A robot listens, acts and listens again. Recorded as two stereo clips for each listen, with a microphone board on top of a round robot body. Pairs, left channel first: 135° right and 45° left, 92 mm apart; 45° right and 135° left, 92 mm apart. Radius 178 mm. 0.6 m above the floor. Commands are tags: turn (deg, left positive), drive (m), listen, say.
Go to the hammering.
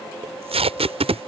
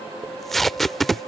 <listen/>
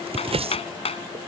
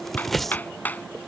<turn deg="-120"/>
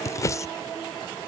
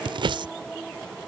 <listen/>
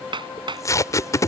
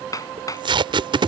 <turn deg="10"/>
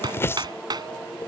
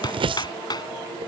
<drive m="1.0"/>
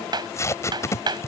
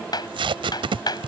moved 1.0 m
<drive m="1.0"/>
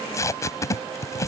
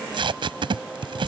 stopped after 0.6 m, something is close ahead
<listen/>
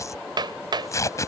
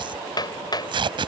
<say>Arrived at the hammering, straight ahead.</say>